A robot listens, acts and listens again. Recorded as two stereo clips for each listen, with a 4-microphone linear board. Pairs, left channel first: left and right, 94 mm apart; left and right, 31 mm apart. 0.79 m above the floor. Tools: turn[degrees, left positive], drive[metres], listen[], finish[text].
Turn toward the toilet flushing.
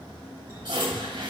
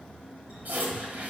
Thought: The toilet flushing: about 65° right or 115° right.
Action: turn[-65]
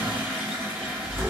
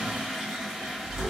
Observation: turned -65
Thought: So it is at 20° right.
Action: turn[-20]
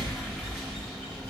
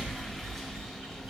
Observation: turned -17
Action: listen[]
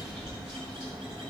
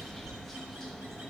Action: listen[]
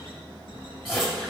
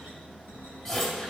Action: finish[Found it: a toilet flushing, straight ahead, 2 to 4 m away.]